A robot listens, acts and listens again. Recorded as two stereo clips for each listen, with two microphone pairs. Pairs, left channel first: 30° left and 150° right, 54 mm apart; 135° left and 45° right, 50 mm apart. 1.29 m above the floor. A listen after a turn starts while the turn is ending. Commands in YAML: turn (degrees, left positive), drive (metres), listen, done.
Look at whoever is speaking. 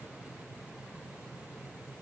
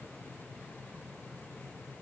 listen: true
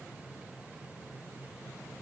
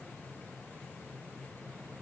listen: true
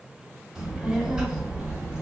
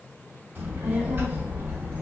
turn: -75
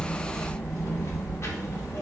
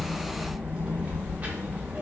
turn: 10
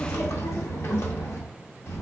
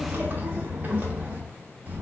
done: "Found it: a child speaking, straight ahead, 1 to 2 m away."